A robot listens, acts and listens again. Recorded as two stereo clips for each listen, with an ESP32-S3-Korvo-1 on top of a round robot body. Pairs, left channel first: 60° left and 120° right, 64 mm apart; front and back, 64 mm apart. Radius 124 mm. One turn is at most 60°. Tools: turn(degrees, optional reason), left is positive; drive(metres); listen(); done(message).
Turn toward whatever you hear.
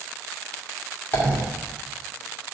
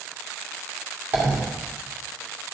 turn(degrees=60, reason="The dropped coin: 115° left.")
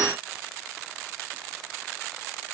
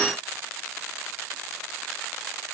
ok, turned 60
turn(degrees=55, reason="Nothing new. It was at 55° left.")
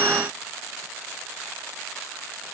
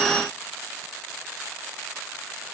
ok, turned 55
done("I heard a dropped coin from this way, but can't make it out now.")